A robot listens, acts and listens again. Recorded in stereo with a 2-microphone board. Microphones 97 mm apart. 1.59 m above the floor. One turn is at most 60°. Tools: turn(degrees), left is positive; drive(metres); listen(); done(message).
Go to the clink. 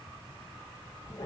listen()
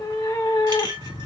turn(degrees=-50)
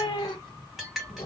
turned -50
drive(metres=1.0)
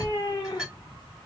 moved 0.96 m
drive(metres=1.0)
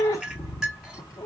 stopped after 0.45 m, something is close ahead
done("Arrived at the clink, straight ahead.")